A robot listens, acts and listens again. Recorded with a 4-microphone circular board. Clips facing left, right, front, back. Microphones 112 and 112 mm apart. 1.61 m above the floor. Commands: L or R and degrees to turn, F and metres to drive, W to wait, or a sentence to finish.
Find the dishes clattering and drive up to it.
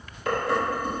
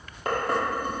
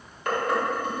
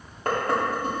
R130
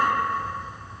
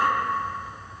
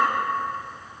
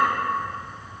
W
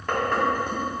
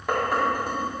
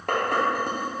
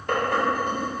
R10
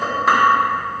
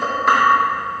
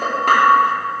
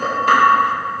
F1.0
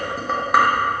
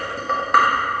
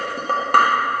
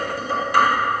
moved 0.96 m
F1.0
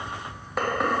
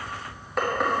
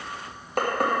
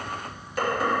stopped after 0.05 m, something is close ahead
Arrived at the dishes clattering, straight ahead.